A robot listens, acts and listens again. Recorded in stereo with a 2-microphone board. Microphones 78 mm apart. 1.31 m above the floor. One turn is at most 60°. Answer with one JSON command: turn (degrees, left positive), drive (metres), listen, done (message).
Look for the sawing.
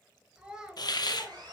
{"turn": -60}
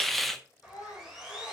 {"turn": -10}
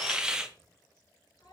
{"listen": true}
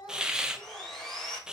{"done": "Facing the sawing."}